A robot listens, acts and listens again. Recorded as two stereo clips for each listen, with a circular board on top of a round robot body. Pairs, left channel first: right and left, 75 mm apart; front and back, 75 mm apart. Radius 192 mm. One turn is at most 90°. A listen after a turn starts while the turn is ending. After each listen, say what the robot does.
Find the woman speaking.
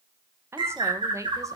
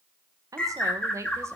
Turn 90° left.
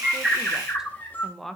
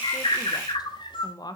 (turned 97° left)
Found it: a woman speaking, straight ahead, 1 to 2 m away.